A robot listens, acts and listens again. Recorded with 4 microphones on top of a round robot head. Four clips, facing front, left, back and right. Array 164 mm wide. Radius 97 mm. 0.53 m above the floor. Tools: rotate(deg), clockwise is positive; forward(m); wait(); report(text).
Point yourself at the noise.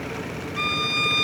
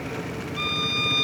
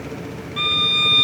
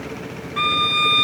rotate(105)
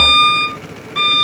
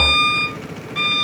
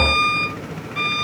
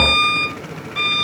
report("Facing the violin.")